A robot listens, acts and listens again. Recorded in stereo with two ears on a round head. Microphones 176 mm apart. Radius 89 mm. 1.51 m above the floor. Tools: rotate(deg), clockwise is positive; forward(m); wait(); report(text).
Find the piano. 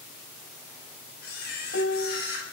rotate(-60)
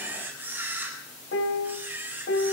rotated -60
rotate(-60)
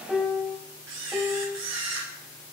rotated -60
report("Found it: a piano, straight ahead.")